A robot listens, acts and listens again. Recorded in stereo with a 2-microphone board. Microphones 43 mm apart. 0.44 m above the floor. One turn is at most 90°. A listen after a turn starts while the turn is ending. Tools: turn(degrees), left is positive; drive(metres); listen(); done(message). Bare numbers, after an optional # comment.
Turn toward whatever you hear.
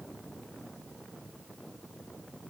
listen()
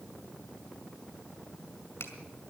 listen()
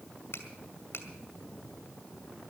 # The finger snap: about 65° left or 115° left.
turn(65)
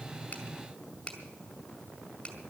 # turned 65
# So it is at 20° left.
turn(20)
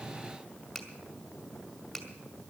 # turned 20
done("Found it: a finger snap, straight ahead.")